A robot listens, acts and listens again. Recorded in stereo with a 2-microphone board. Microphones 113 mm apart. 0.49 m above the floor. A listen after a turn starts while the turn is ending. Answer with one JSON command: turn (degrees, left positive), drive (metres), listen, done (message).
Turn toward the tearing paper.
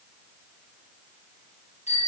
{"listen": true}
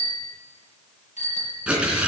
{"turn": -30}
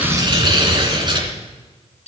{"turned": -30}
{"turn": -135}
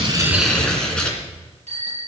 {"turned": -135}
{"turn": 10}
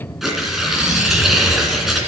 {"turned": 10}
{"done": "Facing the tearing paper."}